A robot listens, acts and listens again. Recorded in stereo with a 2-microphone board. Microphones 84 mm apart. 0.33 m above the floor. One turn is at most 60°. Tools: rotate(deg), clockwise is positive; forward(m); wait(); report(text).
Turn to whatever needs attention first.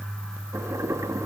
wait()
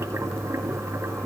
wait()
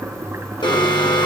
rotate(-60)
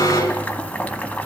rotate(-40)
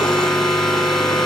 report("Facing the alarm.")